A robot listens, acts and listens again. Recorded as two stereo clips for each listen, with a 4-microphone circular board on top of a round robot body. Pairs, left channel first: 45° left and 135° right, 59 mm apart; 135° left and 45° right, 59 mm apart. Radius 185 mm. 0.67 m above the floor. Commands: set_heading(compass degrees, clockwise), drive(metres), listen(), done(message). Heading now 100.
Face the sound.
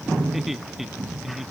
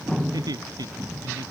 set_heading(150)
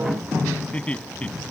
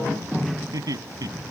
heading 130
set_heading(155)
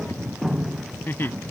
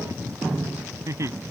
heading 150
set_heading(160)
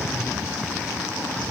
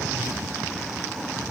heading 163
listen()
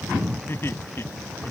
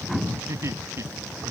done("Facing the laughter.")